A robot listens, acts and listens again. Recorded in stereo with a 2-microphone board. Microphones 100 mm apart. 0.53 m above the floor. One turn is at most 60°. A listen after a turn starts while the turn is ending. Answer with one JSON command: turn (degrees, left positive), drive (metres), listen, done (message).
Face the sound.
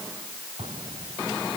{"turn": -60}
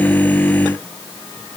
{"turn": -30}
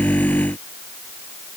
{"done": "I heard an explosion from this way, but can't make it out now."}